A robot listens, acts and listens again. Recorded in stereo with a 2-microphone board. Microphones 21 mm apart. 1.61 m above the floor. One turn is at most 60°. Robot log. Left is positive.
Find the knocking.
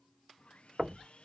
note: The knocking: about 30° right or 150° right.
cmd yaw -30
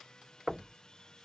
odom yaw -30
end: Facing the knocking.